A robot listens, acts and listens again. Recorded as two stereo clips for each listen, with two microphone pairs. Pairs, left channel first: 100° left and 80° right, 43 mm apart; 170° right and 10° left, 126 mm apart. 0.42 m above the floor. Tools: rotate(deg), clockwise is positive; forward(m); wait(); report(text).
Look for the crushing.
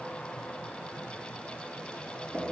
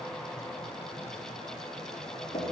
wait()
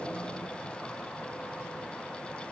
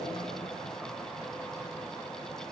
wait()
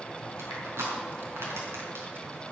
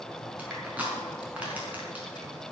rotate(70)
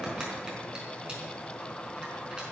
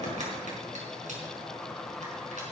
wait()
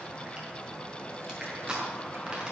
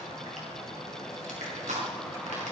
rotate(10)
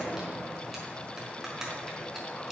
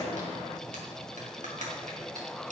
report("Found it: crushing, straight ahead, over 4 m away.")